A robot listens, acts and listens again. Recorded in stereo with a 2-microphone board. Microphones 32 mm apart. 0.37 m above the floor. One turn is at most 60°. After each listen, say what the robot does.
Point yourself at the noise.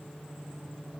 Keep listening.
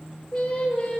Turn 25° left.
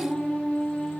Turn 60° left.
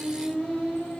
Turn 60° left.
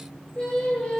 Turn 25° left.
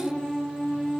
Facing the singing.